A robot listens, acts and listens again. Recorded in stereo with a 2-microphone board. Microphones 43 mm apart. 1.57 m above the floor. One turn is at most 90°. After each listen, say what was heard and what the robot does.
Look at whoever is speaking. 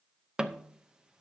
Keep listening.
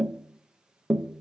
Keep listening.
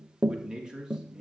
The man speaking: about 20° right or 160° right. Turn 20° right.
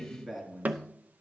Found it: a man speaking, straight ahead, 2 to 4 m away.